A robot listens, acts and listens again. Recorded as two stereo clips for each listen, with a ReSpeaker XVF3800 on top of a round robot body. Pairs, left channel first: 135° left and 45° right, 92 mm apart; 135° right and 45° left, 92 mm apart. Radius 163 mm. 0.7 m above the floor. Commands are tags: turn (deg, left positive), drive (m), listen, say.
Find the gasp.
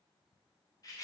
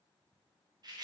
<listen/>
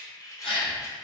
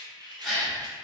<turn deg="135"/>
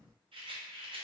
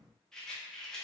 <say>Facing where the gasp came from. I can't hear it now.</say>